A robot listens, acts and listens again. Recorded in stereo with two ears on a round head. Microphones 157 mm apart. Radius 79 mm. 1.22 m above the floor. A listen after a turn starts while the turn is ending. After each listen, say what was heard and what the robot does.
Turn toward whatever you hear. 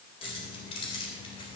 The keys jangling: about 30° left or 150° left. Turn 30° left.
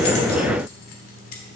So it is at 125° left. Turn 125° left.
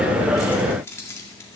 The keys jangling is now 15° left. Turn 15° left.
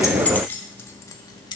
The keys jangling is now 25° left. Turn 25° left.
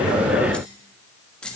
Facing the keys jangling, 1 to 2 m away.